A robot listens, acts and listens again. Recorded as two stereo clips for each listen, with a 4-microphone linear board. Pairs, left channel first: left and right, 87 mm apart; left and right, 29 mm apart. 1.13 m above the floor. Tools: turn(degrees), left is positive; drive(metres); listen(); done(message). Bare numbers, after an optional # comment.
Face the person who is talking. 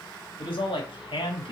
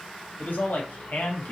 turn(90)
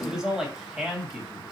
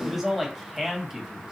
done("Facing the man speaking.")